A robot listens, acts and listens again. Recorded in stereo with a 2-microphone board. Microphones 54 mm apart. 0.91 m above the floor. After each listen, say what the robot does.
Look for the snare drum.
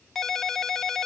Keep listening.
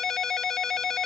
Keep listening.
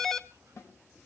Turn 60° left.
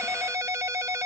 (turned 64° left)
Keep listening.
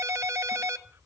Keep listening.
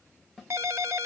Facing the snare drum, over 4 m away.